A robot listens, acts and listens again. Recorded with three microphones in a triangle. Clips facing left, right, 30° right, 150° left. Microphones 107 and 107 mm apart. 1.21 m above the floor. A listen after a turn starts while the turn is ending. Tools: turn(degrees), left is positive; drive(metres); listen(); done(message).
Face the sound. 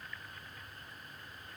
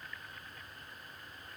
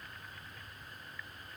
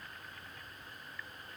listen()
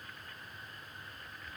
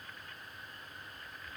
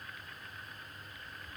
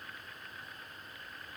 listen()
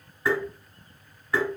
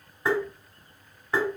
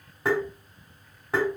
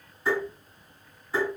turn(degrees=-25)
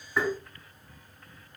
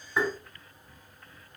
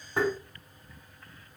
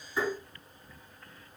turn(degrees=-10)
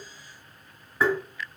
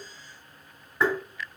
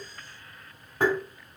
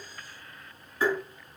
done("Found it: tapping, straight ahead, 2 to 4 m away.")